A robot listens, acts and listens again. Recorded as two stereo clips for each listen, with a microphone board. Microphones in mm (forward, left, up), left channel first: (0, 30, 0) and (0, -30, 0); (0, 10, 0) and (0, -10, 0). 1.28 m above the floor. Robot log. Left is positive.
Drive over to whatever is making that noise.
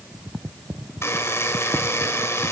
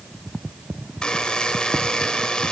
note: The buzzer: about 55° left or 125° left.
cmd yaw +55
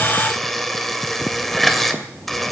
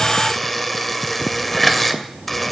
cmd fwd 1.0
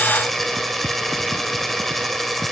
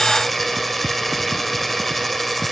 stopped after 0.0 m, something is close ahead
end: Something is in my way. I am facing the buzzer but have not reached it.